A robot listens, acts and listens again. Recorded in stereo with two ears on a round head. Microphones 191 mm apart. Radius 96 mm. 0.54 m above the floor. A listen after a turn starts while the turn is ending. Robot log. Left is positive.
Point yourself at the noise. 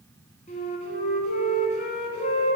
note: The flute: about 35° left or 145° left.
cmd yaw +35
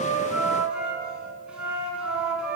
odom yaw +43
end: Found it: a flute, straight ahead, under 1 m away.